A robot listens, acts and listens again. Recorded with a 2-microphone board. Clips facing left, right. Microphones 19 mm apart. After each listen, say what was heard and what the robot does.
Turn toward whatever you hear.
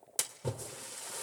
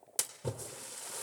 Turn 30° left.
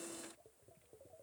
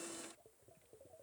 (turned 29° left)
Keep listening.
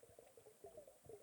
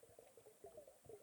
I heard a splash, but can't make it out now. It was about 25° right or 150° left.